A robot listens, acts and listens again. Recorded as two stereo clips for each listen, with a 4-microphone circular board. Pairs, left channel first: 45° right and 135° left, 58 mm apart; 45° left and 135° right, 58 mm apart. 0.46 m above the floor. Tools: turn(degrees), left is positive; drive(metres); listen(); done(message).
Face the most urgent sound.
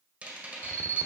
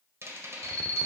turn(degrees=110)
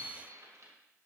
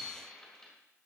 listen()
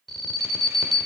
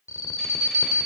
turn(degrees=40)
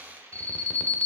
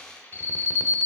turn(degrees=10)
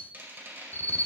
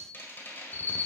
done("Found it: an alarm, straight ahead, under 1 m away.")